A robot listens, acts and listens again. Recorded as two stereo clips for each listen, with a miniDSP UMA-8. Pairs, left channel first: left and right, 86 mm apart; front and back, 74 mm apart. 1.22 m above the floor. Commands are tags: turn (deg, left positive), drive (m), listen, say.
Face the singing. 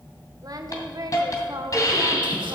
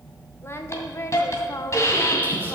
<turn deg="-50"/>
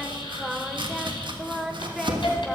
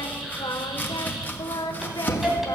<say>Facing the singing, under 1 m away.</say>